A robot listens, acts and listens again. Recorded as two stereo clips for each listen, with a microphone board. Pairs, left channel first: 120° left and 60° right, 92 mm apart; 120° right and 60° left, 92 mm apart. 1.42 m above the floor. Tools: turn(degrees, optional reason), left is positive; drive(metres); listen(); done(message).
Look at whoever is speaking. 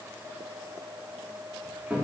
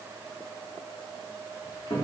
listen()
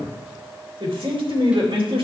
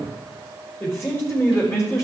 turn(degrees=-60, reason="The man speaking: 60° right.")
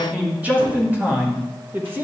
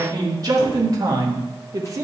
done("Found it: a man speaking, straight ahead.")